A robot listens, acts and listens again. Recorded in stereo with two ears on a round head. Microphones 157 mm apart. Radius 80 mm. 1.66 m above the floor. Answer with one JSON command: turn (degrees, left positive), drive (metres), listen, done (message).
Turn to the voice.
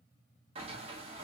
{"listen": true}
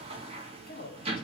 {"turn": 50}
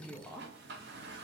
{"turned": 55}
{"done": "Found it: a woman speaking, straight ahead."}